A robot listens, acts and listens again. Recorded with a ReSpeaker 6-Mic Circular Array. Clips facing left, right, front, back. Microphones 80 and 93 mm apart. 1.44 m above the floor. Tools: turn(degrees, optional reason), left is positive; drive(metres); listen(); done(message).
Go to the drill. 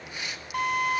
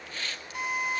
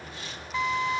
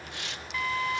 turn(degrees=65, reason="The drill: 65° left.")
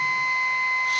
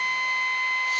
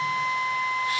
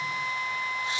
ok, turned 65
turn(degrees=15, reason="The drill is now 15° left.")
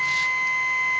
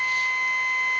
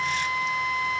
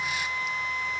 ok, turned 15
drive(metres=1.0)
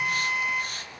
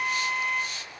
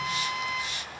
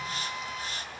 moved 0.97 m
drive(metres=1.0)
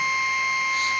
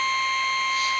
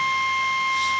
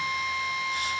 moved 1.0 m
turn(degrees=10, reason="The drill is now 10° left.")
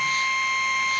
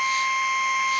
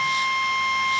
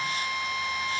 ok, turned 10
drive(metres=1.0)
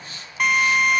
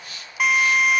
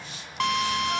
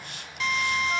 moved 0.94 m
drive(metres=1.0)
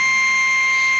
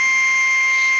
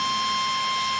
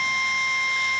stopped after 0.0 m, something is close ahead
done("I am next to the drill.")